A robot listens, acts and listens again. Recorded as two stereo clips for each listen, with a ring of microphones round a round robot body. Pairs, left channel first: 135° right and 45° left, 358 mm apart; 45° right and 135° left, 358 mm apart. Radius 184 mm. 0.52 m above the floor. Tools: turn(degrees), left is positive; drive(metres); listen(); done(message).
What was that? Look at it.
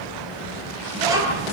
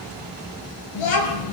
turn(degrees=-35)
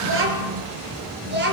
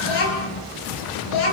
turn(degrees=-20)
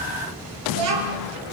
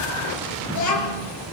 done("Found it: a child speaking, straight ahead.")